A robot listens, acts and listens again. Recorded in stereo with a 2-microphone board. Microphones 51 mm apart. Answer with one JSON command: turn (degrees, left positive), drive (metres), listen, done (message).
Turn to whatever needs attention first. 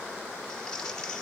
{"listen": true}
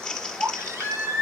{"turn": -75}
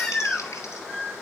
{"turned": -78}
{"done": "Facing the baby crying."}